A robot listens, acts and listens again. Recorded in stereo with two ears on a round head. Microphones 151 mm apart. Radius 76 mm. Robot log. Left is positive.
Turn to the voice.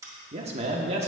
note: The man speaking: about 40° right or 140° right.
cmd yaw -40
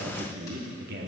note: So it is at 95° right.
cmd yaw -95
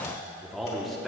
end: Found it: a man speaking, straight ahead.